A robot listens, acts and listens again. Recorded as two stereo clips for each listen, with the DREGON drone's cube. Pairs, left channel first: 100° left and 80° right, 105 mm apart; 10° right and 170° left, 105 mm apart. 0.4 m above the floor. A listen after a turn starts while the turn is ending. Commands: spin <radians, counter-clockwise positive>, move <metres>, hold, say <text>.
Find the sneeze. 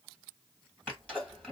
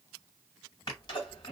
spin 0.44
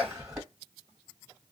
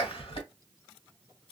say Found it: a sneeze, straight ahead, 1 to 2 m away.